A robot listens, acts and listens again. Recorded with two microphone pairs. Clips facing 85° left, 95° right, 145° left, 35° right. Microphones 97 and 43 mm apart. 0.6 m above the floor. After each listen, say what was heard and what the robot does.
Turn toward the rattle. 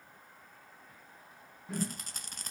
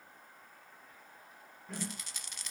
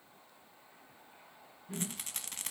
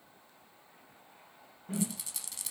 The rattle: 120° left. Turn 120° left.
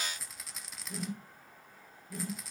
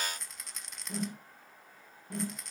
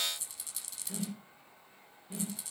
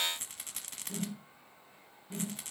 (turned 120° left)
Found it: a rattle, straight ahead.